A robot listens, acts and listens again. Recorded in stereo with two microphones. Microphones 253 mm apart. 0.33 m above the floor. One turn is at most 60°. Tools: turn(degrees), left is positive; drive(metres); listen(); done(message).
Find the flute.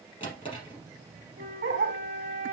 turn(degrees=-30)
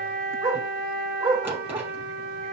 turn(degrees=-60)
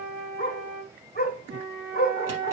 turn(degrees=-60)
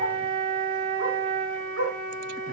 turn(degrees=-20)
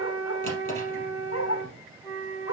done("Facing the flute.")